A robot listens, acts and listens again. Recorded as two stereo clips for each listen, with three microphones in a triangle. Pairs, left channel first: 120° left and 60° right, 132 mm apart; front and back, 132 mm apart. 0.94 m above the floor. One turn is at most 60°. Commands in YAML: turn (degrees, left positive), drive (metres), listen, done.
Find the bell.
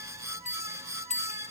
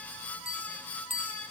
turn: 60
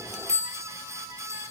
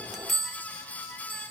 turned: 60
turn: 60
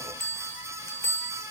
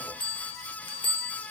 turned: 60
turn: 50
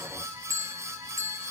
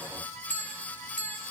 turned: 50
done: "Found it: a bell, straight ahead, 1 to 2 m away."